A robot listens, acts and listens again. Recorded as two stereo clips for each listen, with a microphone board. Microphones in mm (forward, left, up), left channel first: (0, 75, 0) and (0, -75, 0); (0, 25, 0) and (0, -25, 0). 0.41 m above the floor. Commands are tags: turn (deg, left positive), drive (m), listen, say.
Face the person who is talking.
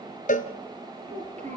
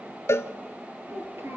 <turn deg="-55"/>
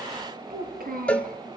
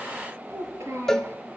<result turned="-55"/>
<turn deg="-75"/>
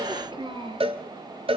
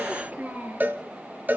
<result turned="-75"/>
<turn deg="-35"/>
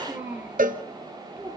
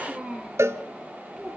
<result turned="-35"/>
<turn deg="-15"/>
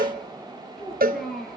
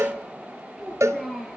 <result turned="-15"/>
<say>Found it: a child speaking, straight ahead, over 4 m away.</say>